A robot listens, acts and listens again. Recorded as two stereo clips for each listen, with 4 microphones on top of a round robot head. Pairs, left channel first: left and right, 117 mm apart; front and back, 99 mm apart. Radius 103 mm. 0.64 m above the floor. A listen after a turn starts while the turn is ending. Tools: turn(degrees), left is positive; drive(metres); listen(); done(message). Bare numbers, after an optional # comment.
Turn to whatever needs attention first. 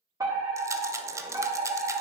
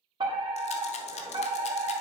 # The fire alarm: 150° right.
turn(-150)
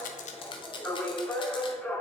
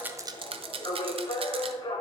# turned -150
# The fire alarm is now 20° left.
turn(20)
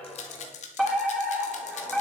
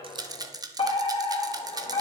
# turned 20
done("Found it: a fire alarm, straight ahead, 2 to 4 m away.")